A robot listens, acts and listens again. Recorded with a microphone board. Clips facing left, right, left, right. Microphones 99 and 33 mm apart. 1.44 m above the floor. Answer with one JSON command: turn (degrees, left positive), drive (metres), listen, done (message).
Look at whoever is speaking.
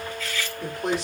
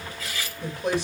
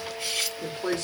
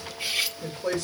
{"turn": 90}
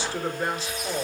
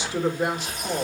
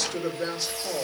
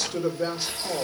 {"turn": -15}
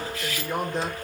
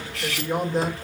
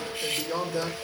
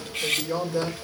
{"done": "Facing the woman speaking."}